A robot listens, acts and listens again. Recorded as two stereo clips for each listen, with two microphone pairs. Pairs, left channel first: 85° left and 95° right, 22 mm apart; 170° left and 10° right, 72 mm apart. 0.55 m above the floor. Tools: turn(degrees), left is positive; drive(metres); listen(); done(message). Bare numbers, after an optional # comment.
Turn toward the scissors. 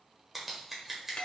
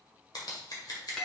# The scissors: 175° right.
turn(-175)
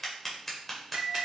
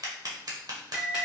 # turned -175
done("Found it: scissors, straight ahead, 1 to 2 m away.")